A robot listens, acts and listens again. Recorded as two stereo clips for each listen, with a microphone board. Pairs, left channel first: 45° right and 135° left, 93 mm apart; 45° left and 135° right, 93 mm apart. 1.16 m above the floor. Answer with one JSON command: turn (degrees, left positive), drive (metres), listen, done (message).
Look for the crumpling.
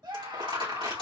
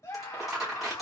{"turn": 140}
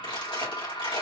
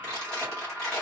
{"turn": -35}
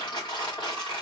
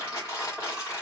{"turn": -10}
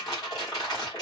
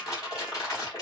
{"done": "Facing the crumpling."}